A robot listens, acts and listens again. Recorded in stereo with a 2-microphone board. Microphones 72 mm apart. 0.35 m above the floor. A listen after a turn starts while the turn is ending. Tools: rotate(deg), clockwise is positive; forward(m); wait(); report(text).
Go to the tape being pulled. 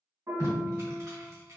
rotate(50)
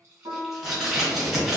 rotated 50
forward(1.0)
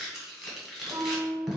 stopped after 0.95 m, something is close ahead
rotate(10)
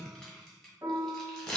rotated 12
report("I am next to the tape being pulled.")